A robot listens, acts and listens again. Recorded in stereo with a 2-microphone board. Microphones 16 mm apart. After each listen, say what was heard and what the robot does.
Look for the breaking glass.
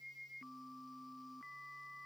Keep listening.
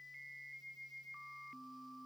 Keep listening.
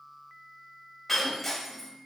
Turn 30° left.
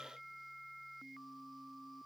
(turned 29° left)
Keep listening.
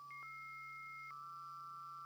I heard breaking glass, but can't make it out now. It was about 25° right or 150° left.